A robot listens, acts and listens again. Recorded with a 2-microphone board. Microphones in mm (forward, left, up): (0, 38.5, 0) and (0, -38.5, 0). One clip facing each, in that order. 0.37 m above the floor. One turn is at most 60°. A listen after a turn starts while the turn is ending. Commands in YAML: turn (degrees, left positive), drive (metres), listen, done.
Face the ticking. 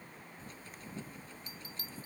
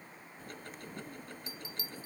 turn: -60
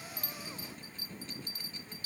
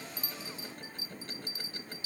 turn: -60
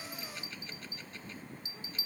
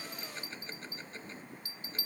turn: -30
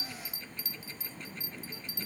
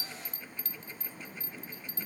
listen: true
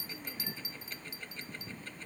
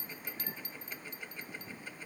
turn: -10
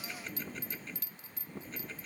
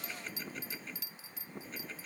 done: "Facing the ticking."